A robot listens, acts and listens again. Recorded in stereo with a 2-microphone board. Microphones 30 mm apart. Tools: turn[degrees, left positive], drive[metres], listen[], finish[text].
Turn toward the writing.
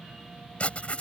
Thought: The writing: about 45° left or 135° left.
Action: turn[45]
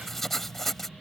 Action: finish[Found it: writing, straight ahead.]